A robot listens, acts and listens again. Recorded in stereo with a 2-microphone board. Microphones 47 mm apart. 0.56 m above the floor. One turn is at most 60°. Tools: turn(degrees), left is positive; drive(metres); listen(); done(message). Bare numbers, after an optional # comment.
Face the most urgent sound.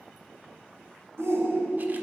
# The shout: about 70° right or 110° right.
turn(-60)
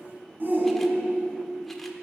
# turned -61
# So it is at 45° right.
turn(-45)
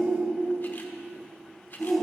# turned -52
done("Facing the shout.")